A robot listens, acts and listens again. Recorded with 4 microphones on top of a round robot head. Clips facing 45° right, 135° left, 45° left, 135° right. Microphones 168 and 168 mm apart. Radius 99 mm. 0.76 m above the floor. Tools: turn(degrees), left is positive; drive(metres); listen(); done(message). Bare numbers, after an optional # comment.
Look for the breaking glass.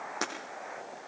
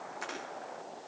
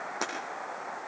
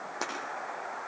# The breaking glass: 40° right.
turn(-40)
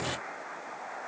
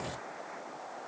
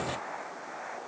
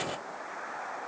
done("Facing where the breaking glass came from. I can't hear it now.")